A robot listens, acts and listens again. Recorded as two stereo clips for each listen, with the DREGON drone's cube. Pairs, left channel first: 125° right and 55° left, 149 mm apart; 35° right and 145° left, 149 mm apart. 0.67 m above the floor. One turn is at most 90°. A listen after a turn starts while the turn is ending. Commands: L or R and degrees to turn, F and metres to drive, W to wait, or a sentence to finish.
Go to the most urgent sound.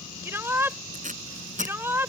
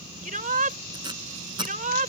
L90
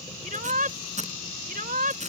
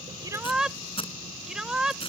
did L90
L60
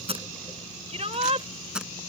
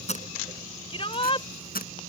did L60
L15
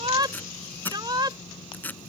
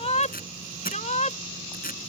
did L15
F1.0
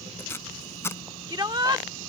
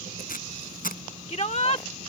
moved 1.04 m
F1.0
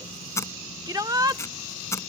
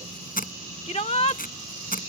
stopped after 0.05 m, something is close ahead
I am next to the shout.